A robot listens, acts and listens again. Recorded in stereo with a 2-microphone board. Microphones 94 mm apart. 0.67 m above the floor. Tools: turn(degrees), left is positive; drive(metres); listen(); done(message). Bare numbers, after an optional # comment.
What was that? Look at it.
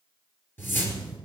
# The whoosh: about 20° left or 160° left.
turn(20)
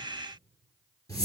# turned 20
# So it is at 140° left.
turn(140)
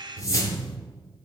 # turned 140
# The whoosh is now 35° left.
turn(35)
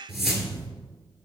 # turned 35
done("Facing the whoosh.")